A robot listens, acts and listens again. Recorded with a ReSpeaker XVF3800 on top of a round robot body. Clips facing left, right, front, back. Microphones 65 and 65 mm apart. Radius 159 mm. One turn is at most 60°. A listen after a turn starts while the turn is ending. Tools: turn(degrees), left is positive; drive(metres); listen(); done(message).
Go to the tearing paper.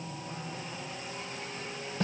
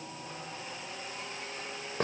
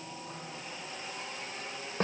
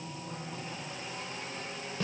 listen()
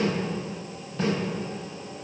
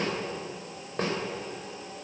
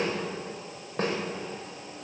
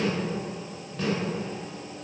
listen()
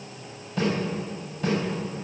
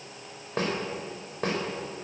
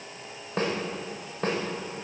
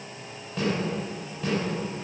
done("I can't make out tearing paper to turn to.")